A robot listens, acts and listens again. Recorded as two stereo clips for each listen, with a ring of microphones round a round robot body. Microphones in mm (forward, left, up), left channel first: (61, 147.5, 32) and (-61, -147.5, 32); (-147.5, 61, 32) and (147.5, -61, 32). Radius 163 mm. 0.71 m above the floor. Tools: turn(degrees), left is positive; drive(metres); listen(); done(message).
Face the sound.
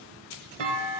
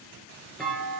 turn(degrees=-115)
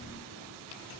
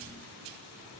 done("Facing where the clunk came from. I can't hear it now.")